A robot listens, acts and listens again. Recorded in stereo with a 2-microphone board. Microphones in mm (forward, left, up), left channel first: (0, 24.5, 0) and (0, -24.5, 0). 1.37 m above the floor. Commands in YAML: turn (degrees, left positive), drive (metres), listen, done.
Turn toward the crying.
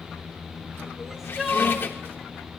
turn: -30
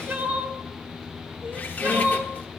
turn: -145
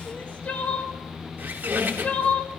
turn: 30
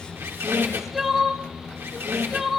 done: "Facing the crying."